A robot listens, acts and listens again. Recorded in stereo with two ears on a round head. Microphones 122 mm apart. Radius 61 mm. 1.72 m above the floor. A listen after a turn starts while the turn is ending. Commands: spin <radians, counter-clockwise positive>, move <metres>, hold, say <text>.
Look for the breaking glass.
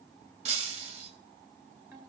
spin -0.87
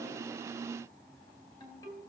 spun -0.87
hold
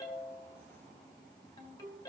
say I heard breaking glass, but can't make it out now. It was about straight ahead or 80° right.